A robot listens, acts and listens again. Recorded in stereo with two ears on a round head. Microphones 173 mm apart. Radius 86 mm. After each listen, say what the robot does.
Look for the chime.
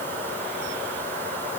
Keep listening.
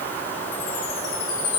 Turn 70° left.
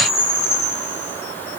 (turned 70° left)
Turn 35° left.
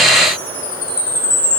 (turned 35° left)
Turn 20° left.
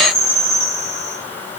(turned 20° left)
Facing the chime, over 4 m away.